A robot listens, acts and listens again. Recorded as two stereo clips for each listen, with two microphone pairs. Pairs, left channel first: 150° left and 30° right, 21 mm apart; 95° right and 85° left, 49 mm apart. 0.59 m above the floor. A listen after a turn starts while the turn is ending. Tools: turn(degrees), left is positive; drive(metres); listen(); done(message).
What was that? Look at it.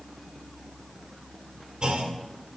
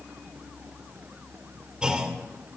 turn(degrees=15)
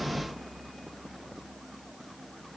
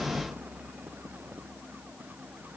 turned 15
done("Facing where the clunk came from. I can't hear it now.")